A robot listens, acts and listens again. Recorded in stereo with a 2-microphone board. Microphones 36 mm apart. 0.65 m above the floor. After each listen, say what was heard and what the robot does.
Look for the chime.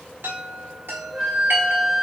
The chime: about 75° right or 105° right. Turn 75° right.
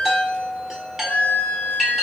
So it is at 10° right. Turn 10° right.
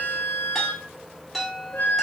Facing the chime, 1 to 2 m away.